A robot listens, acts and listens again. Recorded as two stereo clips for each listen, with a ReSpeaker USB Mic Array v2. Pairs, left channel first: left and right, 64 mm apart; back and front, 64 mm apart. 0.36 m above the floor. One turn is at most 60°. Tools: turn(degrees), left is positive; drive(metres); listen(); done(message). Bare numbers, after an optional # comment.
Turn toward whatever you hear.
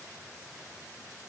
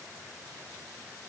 listen()
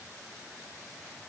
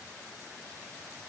listen()
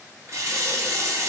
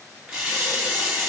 # The running tap: 70° right.
turn(-60)
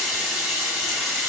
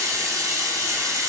# The running tap is now 10° right.
turn(-10)
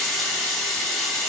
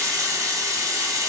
done("Found it: a running tap, straight ahead.")